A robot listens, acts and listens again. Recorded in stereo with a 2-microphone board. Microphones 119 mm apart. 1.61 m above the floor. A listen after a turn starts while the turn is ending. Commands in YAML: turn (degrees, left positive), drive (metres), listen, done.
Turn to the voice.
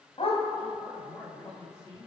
turn: 25
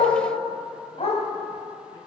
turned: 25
listen: true
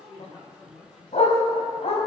turn: 135
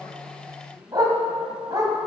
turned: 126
turn: 15
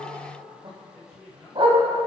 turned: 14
done: "Found it: a man speaking, straight ahead."